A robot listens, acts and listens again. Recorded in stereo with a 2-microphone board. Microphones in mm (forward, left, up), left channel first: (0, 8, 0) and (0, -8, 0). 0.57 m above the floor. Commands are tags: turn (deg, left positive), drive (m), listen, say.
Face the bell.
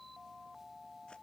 <listen/>
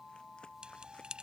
<turn deg="-90"/>
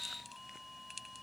<say>Found it: a bell, straight ahead.</say>